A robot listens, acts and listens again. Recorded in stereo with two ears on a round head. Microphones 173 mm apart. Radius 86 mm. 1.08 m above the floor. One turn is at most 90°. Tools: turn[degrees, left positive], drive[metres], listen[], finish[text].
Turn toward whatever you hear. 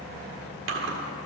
Thought: The chewing: about 70° right or 110° right.
Action: turn[-70]
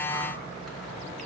Action: listen[]
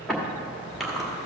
Action: finish[Facing the chewing, 1 to 2 m away.]